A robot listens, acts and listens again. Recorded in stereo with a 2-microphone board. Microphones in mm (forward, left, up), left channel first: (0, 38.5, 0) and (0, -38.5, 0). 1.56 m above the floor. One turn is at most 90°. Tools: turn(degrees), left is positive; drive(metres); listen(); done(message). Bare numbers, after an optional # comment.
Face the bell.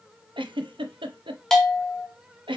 turn(30)
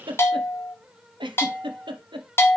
# So it is at 150° left.
turn(90)
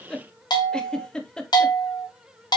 # The bell is now 65° left.
turn(65)
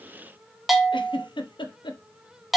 done("Found it: a bell, straight ahead, 1 to 2 m away.")